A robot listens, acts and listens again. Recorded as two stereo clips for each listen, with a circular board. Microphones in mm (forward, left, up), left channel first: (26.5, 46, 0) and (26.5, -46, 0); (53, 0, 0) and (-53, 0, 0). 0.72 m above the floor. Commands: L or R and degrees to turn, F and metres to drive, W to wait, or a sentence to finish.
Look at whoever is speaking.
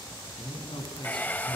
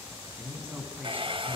L105
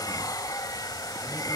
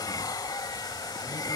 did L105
W
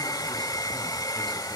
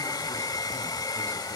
W
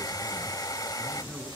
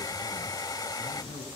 Found it: a man speaking, straight ahead.